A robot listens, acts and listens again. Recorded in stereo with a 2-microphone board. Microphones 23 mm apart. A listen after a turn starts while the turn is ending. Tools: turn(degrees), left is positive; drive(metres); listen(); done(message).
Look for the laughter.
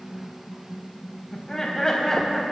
turn(degrees=25)
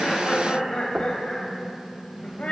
turn(degrees=120)
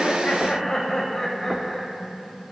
turn(degrees=25)
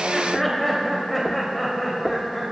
done("Found it: laughter, straight ahead.")